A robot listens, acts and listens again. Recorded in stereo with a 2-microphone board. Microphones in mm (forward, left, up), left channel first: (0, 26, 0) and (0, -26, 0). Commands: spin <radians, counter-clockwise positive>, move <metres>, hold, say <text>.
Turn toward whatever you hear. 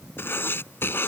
spin 0.87
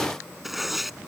say Found it: writing, straight ahead.